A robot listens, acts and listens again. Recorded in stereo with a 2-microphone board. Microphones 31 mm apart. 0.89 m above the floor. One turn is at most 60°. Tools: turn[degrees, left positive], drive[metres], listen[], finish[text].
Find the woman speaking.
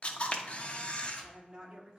Thought: The woman speaking: about 25° right or 155° right.
Action: turn[-25]
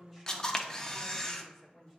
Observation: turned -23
Thought: So it is at 10° left.
Action: turn[10]
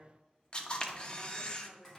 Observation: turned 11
Thought: The woman speaking is now 10° left.
Action: turn[10]
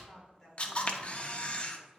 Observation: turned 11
Action: finish[Facing the woman speaking.]